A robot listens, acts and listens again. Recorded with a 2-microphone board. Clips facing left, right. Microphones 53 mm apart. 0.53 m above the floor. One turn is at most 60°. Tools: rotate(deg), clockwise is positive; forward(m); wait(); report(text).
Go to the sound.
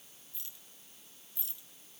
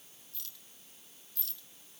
rotate(-20)
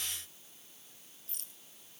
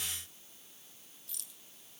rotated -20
rotate(-60)
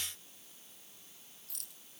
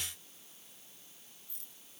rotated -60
rotate(-60)
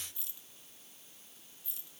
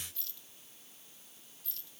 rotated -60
rotate(-15)
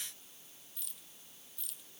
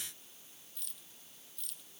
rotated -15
forward(1.0)
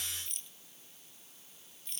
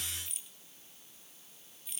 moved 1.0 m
forward(1.0)
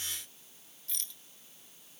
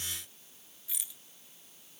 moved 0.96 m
rotate(10)
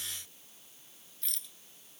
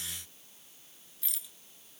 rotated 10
forward(1.0)
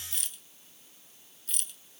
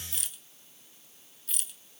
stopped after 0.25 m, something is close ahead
report("I am next to the rattle.")